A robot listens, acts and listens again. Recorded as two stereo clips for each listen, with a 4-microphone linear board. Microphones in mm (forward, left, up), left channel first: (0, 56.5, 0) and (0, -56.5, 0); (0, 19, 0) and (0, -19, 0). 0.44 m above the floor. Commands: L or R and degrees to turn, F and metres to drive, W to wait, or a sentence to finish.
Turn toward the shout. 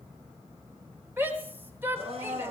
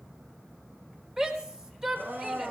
R20
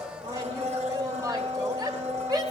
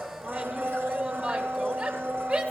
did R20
R140
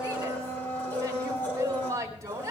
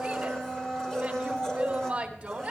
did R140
R30
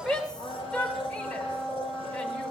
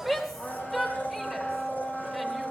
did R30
L10
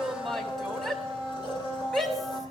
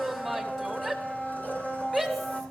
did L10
Found it: a shout, straight ahead, 2 to 4 m away.